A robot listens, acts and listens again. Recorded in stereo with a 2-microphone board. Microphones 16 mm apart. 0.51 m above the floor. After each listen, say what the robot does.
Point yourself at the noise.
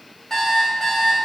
Turn 35° left.
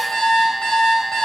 Turn 105° left.
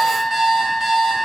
Turn 35° right.
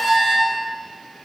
Facing the alarm clock.